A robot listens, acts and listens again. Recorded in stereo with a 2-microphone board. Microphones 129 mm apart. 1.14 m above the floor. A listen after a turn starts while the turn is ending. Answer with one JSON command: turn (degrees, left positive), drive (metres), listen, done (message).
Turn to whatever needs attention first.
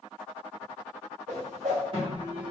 {"turn": -40}
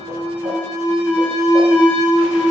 {"done": "Found it: an alarm, straight ahead, 1 to 2 m away."}